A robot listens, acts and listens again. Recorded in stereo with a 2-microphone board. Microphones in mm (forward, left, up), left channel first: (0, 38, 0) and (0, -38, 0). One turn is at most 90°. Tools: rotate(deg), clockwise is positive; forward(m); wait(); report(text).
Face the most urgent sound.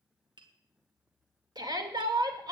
rotate(65)
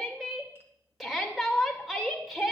report("Found it: a shout, straight ahead.")